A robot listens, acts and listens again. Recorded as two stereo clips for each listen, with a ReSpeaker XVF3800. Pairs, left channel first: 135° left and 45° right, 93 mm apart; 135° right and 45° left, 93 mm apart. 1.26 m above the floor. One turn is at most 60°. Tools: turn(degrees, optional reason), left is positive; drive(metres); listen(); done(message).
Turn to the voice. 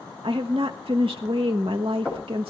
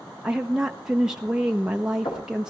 turn(degrees=-35, reason="The woman speaking: 35° right.")
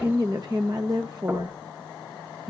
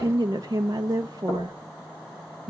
done("Facing the woman speaking.")